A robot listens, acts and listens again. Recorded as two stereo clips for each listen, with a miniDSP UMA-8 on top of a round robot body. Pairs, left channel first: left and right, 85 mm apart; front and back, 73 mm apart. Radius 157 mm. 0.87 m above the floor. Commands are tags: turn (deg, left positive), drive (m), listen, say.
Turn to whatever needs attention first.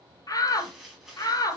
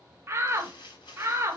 <turn deg="130"/>
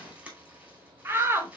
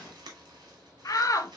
<turn deg="-30"/>
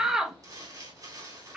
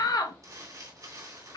<say>Facing the shout.</say>